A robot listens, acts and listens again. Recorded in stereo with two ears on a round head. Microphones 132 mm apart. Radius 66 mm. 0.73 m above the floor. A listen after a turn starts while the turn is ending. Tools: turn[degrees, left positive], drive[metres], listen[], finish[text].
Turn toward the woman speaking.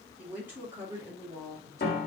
Thought: The woman speaking: about 20° right or 160° right.
Action: turn[-20]
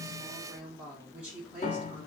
Action: turn[-30]
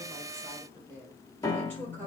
Thought: So it is at 10° left.
Action: turn[10]
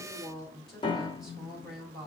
Action: finish[Facing the woman speaking.]